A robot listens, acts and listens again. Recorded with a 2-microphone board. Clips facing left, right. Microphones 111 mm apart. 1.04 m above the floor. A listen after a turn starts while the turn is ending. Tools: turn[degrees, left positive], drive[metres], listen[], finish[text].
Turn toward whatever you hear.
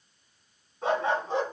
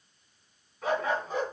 Thought: The dog barking: about 30° left or 150° left.
Action: turn[30]
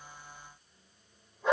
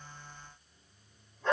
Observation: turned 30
Thought: So it is at 10° left.
Action: turn[10]
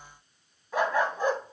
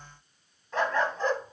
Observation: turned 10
Thought: The dog barking is now 15° left.
Action: turn[15]
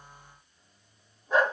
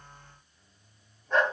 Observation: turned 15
Thought: The dog barking is now 10° left.
Action: turn[10]
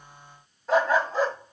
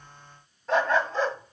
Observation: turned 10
Thought: The dog barking is now 10° left.
Action: turn[10]
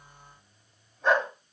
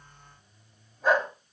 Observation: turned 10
Action: finish[Found it: a dog barking, straight ahead, 1 to 2 m away.]